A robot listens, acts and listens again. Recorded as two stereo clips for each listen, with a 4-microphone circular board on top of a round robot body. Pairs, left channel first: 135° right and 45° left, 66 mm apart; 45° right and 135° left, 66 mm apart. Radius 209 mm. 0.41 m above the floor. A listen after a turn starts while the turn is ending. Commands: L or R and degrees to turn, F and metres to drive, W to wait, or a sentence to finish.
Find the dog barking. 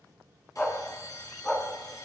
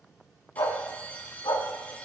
R60
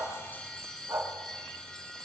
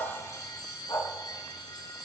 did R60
Found it: a dog barking, straight ahead.